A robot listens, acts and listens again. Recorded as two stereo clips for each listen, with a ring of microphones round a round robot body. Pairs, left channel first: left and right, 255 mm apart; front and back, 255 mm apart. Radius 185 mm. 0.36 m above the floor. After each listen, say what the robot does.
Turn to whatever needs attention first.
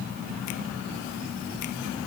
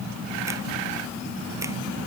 Keep listening.
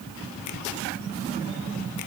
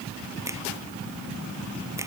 Keep listening.
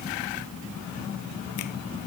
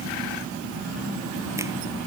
I can't make out anything urgent.